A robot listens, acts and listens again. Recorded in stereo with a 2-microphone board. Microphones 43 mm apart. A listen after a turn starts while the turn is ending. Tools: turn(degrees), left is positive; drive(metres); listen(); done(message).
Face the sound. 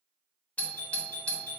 turn(degrees=35)
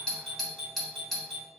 done("Facing the doorbell, 1 to 2 m away.")